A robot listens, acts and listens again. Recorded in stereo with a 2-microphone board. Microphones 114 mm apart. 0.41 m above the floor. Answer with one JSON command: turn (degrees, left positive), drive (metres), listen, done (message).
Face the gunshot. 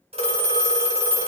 {"listen": true}
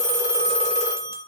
{"listen": true}
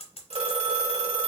{"done": "I can't make out a gunshot to turn to."}